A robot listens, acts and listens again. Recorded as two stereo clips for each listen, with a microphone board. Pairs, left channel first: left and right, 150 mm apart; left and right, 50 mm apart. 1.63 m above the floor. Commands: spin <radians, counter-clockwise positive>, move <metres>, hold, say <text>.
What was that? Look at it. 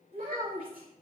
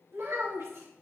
spin -1.22
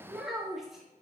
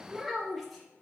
say Found it: a child speaking, straight ahead.